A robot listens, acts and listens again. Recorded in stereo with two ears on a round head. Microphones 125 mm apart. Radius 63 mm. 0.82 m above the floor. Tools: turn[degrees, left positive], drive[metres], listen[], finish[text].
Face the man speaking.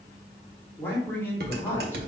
Thought: The man speaking: about 15° left or 165° left.
Action: turn[15]
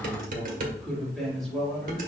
Action: turn[30]
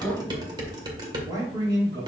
Thought: So it is at 25° right.
Action: turn[-25]
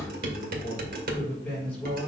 Thought: The man speaking is now 10° left.
Action: turn[10]
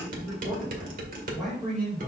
Action: finish[Facing the man speaking, over 4 m away.]